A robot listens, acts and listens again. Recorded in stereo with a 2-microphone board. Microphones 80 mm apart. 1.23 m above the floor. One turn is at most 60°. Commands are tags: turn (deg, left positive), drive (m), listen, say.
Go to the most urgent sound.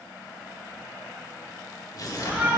<turn deg="-20"/>
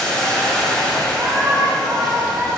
<turn deg="-60"/>
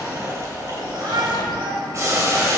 <turn deg="-60"/>
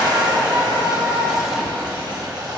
<turn deg="-25"/>
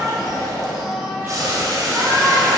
<drive m="1.0"/>
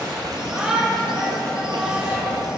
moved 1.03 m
<turn deg="-10"/>
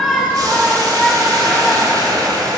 <drive m="1.0"/>
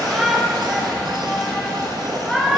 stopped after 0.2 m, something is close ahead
<say>I am next to the shout.</say>